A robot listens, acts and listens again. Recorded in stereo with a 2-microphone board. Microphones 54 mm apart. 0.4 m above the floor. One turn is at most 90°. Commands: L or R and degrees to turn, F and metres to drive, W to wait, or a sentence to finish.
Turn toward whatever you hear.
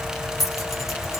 R30
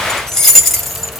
L30
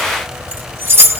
R50
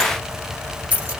R25
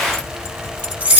R25
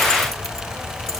W
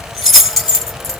Facing the keys jangling.